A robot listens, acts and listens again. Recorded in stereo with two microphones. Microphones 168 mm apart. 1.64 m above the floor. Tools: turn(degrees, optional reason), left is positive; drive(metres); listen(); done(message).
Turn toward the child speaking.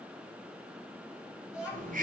turn(degrees=-30)
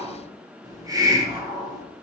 listen()
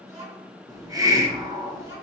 turn(degrees=-140, reason="So it is at 140° right.")
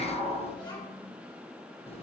turn(degrees=25, reason="The child speaking is now 25° left.")
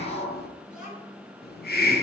turn(degrees=-10, reason="The child speaking is now 10° right.")
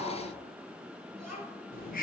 done("Facing the child speaking.")